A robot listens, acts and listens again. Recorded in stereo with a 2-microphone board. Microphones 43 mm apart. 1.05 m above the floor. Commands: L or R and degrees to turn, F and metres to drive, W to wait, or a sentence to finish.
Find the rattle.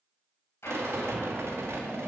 R90
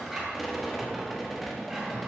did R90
Facing the rattle, 1 to 2 m away.